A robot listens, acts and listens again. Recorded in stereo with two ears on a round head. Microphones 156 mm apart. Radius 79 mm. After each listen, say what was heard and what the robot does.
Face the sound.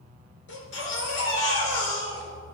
Turn 90° left.
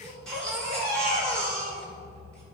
Facing the baby crying.